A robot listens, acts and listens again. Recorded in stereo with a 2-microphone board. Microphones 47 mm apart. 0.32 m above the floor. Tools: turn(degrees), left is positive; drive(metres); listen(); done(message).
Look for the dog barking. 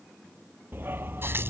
turn(degrees=-50)
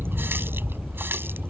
done("Facing the dog barking.")